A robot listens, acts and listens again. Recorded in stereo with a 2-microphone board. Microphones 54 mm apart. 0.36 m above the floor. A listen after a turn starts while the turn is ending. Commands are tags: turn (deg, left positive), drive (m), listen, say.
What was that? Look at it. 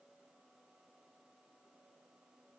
<listen/>
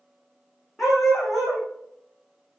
<turn deg="30"/>
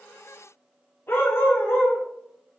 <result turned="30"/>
<turn deg="130"/>
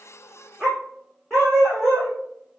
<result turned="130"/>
<turn deg="10"/>
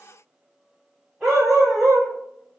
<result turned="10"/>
<say>Facing the dog barking, over 4 m away.</say>